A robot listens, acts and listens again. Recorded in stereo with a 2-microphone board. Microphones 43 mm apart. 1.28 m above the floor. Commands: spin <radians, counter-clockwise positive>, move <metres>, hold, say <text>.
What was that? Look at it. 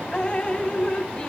spin 0.44
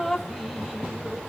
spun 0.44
say Facing the dripping.